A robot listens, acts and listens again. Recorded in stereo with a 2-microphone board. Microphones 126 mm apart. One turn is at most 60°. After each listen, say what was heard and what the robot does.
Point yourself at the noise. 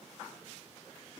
Keep listening.
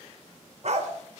The dog barking: about 65° right or 115° right. Turn 60° right.
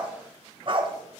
So it is at 40° right. Turn 40° right.
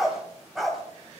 Found it: a dog barking, straight ahead.